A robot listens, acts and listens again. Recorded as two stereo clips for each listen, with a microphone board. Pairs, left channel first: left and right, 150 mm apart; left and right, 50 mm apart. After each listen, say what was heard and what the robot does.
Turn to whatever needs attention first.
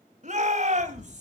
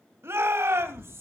The shout: about 55° right or 125° right. Turn 55° right.
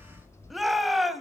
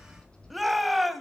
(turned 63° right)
Facing the shout, 2 to 4 m away.